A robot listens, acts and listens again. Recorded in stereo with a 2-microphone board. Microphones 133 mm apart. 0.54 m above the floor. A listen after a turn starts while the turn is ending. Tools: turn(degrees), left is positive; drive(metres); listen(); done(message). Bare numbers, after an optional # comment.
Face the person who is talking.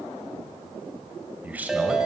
turn(-30)
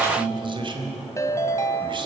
# So it is at 140° right.
turn(-140)
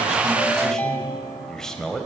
done("Facing the man speaking, 2 to 4 m away.")